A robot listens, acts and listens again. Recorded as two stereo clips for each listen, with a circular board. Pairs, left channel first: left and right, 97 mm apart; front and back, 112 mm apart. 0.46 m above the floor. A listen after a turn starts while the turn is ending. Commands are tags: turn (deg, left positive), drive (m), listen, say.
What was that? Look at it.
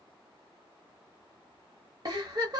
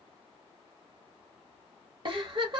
<turn deg="-135"/>
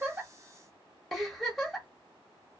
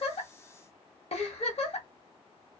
<say>Found it: a giggle, straight ahead, 1 to 2 m away.</say>